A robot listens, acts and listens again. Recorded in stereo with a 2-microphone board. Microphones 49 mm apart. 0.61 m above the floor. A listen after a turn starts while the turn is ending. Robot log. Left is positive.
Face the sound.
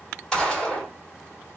cmd yaw +30
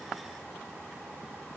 cmd idle
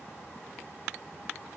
end: I heard a gunshot, but can't make it out now. It was about 15° right or 135° left.